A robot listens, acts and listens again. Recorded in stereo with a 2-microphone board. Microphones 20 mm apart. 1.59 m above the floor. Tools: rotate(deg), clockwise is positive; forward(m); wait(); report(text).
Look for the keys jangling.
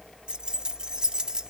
rotate(40)
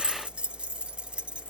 rotate(115)
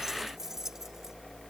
wait()
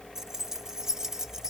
rotate(30)
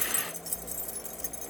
report("Found it: keys jangling, straight ahead.")